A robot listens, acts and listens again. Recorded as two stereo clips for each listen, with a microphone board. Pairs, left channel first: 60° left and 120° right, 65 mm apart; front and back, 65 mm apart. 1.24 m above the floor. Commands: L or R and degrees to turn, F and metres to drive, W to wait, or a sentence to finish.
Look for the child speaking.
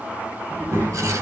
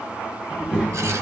R105
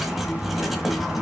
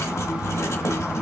Facing the child speaking, 1 to 2 m away.